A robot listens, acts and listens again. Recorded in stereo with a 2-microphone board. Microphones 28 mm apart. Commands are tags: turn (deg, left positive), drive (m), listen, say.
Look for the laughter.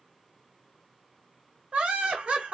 <turn deg="-40"/>
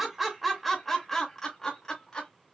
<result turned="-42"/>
<turn deg="30"/>
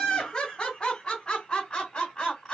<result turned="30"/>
<turn deg="30"/>
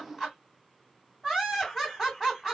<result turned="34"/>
<say>Facing the laughter, 2 to 4 m away.</say>